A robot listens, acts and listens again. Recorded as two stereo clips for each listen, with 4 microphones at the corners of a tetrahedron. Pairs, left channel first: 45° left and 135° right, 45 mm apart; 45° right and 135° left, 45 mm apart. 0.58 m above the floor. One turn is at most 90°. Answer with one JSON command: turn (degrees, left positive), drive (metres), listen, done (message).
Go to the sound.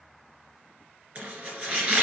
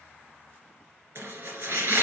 {"turn": 90}
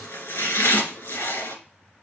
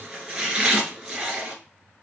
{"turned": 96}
{"turn": 65}
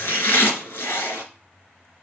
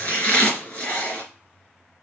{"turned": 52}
{"turn": 15}
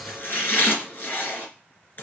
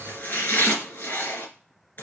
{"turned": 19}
{"drive": 1.0}
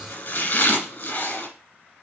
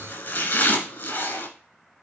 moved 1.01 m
{"turn": -10}
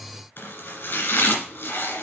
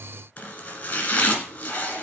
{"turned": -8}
{"drive": 1.0}
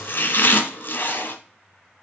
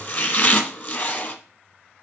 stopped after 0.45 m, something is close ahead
{"done": "I am next to the chopping."}